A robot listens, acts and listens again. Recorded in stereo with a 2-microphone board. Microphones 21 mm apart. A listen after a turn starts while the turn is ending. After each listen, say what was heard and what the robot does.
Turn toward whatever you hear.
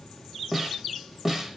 Turn 30° right.
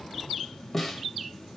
So it is at 15° left. Turn 15° left.
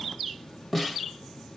Facing the snare drum.